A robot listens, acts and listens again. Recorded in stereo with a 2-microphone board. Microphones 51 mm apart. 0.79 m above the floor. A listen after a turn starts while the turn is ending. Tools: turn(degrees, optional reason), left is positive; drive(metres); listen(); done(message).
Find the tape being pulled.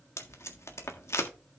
turn(degrees=65, reason="The tape being pulled: about 65° left or 115° left.")
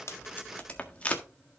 turn(degrees=30, reason="So it is at 30° left.")
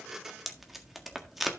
done("Facing the tape being pulled, 1 to 2 m away.")